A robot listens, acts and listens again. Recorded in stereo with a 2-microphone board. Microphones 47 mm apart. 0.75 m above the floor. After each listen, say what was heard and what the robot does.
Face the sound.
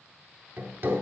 The hammering: about 55° right or 125° right. Turn 55° right.
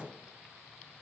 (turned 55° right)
Keep listening.
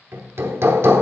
So it is at 70° right. Turn 70° right.
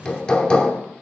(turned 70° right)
The hammering is now 20° left. Turn 20° left.
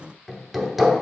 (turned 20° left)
Found it: hammering, straight ahead, under 1 m away.